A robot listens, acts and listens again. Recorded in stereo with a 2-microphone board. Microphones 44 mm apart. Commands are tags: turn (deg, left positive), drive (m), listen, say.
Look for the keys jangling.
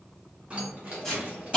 <turn deg="-30"/>
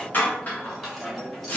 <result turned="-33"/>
<say>Found it: keys jangling, straight ahead, 1 to 2 m away.</say>